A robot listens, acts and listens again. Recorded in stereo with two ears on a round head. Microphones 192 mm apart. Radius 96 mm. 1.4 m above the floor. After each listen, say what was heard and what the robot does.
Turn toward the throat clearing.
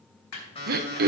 The throat clearing: about 45° right or 135° right. Turn 45° right.
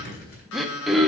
Facing the throat clearing, 1 to 2 m away.